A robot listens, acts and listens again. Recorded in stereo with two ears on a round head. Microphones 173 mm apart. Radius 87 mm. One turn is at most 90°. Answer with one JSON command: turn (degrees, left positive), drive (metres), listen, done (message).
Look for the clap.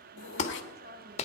{"turn": 35}
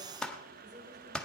{"done": "Found it: a clap, straight ahead."}